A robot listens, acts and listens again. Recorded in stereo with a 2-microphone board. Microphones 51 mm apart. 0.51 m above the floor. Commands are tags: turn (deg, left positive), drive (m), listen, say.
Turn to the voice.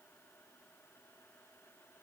<listen/>
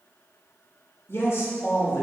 <turn deg="55"/>
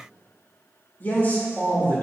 <turn deg="45"/>
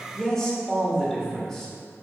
<turn deg="10"/>
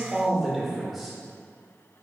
<say>Found it: a man speaking, straight ahead.</say>